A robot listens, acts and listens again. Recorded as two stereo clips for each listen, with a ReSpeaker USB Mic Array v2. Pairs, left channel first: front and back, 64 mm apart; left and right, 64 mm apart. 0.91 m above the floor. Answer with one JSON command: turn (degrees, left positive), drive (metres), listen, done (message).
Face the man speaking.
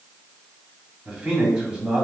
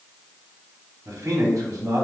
{"turn": -115}
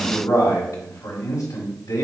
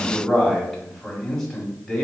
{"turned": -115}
{"done": "Found it: a man speaking, straight ahead, 1 to 2 m away."}